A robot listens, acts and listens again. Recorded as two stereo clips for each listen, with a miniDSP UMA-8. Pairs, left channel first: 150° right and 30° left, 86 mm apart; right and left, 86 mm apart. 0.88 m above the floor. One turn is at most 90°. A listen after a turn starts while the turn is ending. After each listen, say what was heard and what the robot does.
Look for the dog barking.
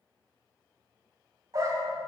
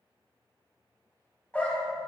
The dog barking: 20° right. Turn 20° right.
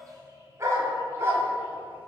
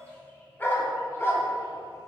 The dog barking is now 30° right. Turn 30° right.
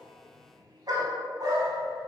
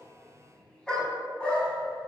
The dog barking is now 15° right. Turn 15° right.
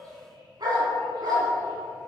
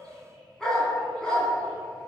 The dog barking is now 10° right. Turn 10° right.
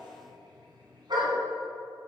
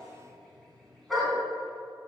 Facing the dog barking.